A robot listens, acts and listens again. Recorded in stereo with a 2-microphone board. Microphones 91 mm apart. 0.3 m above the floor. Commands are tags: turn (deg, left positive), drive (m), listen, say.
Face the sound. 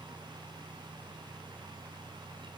<listen/>
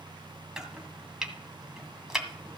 <turn deg="-30"/>
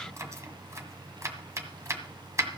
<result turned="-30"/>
<turn deg="-140"/>
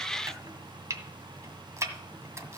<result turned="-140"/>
<turn deg="-40"/>
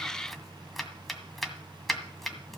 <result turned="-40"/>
<say>Facing the chopping.</say>